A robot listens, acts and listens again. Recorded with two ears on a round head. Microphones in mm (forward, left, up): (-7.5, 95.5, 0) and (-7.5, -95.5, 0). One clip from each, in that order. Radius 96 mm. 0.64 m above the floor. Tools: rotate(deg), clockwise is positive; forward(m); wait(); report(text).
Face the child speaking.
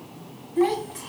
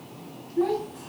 rotate(-75)
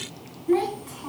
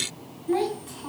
report("Facing the child speaking, 2 to 4 m away.")